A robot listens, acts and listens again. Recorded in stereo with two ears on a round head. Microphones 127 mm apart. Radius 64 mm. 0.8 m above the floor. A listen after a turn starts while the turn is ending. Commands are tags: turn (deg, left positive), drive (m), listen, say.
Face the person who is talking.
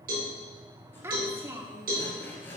<turn deg="-20"/>
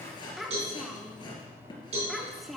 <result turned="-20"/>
<say>Found it: a child speaking, straight ahead, 1 to 2 m away.</say>